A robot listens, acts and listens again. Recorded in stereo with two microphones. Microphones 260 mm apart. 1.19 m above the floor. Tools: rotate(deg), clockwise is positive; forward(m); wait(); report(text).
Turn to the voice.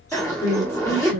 rotate(-90)
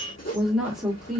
report("Found it: a woman speaking, straight ahead.")